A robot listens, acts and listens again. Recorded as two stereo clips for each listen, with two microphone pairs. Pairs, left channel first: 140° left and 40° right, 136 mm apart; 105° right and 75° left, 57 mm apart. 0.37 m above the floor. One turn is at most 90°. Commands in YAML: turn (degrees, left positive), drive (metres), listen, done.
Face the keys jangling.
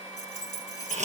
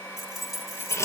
turn: 90
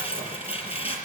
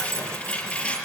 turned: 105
turn: 60
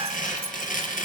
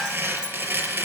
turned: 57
listen: true
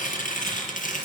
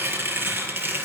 done: "I heard keys jangling from this way, but can't make it out now."